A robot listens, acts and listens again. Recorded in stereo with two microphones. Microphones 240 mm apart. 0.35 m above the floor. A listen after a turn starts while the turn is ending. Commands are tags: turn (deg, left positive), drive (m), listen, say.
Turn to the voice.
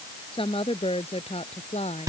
<turn deg="25"/>
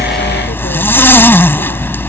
<listen/>
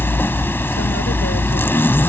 <listen/>
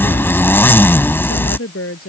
<turn deg="115"/>
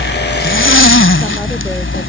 <listen/>
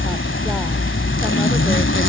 <listen/>
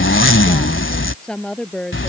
<say>Found it: a woman speaking, straight ahead.</say>